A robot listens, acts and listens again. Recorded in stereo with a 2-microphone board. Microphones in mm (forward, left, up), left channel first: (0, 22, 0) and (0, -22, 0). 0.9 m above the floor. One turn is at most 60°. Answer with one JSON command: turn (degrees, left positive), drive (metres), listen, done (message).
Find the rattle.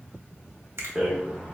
{"turn": -30}
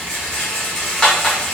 {"turn": 20}
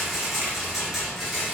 {"done": "Facing the rattle."}